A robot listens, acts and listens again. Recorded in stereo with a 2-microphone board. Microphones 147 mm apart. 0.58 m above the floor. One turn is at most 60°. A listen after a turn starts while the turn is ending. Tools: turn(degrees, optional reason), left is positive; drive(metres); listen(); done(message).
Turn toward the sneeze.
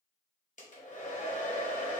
listen()
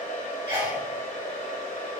turn(degrees=-35, reason="The sneeze: about 35° right or 145° right.")
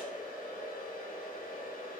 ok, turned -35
listen()
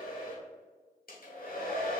done("I heard a sneeze, but can't make it out now. It was about straight ahead or 110° right.")